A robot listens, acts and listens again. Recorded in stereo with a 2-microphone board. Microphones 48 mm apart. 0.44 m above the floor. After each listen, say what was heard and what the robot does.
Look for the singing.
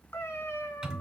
Keep listening.
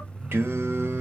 The singing: about 55° right or 125° right. Turn 55° right.
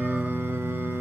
So it is at 45° right. Turn 45° right.
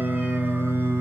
The singing is now 55° right. Turn 55° right.
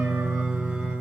The singing is now 25° right. Turn 25° right.
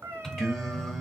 Facing the singing.